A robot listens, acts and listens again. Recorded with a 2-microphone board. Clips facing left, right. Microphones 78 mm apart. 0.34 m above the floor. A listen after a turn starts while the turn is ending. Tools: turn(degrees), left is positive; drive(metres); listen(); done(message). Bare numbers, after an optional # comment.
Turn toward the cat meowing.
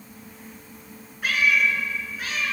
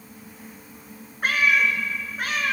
# The cat meowing: about 55° right or 125° right.
turn(-55)
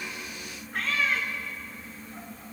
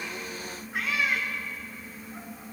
# So it is at 10° right.
turn(-10)
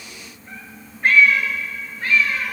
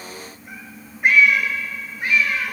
# The cat meowing is now 20° right.
turn(-20)
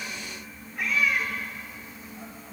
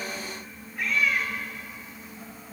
done("Facing the cat meowing.")